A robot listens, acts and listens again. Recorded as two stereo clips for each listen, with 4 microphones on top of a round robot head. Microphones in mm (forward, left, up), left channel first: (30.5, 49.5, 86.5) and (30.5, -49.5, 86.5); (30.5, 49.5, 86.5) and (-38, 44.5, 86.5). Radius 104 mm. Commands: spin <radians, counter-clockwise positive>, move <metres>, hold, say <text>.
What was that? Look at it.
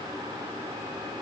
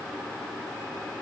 hold
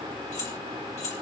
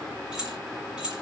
spin 1.83
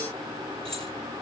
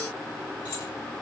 hold
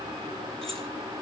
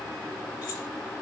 hold
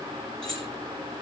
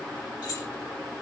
say Found it: keys jangling, straight ahead.